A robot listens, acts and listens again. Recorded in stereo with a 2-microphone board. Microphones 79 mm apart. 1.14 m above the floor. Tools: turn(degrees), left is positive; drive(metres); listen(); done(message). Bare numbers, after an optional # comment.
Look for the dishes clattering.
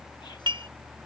turn(-90)
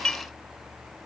# So it is at 10° left.
turn(10)
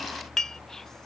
done("Facing the dishes clattering.")